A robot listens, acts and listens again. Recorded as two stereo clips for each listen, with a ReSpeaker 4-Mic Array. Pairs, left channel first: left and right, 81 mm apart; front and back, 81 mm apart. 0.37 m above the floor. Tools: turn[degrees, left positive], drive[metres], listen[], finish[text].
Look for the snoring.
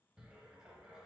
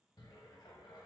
Action: listen[]
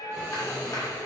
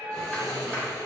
Thought: The snoring: 140° right.
Action: turn[-140]
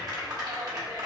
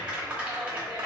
Action: listen[]
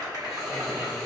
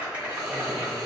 Action: finish[Found it: snoring, straight ahead, 1 to 2 m away.]